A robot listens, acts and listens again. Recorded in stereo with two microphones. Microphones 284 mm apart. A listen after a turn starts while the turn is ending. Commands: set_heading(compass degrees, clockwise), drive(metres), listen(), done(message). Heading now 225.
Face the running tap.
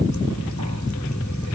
listen()
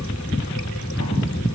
listen()
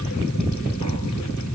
done("I can't make out a running tap to turn to.")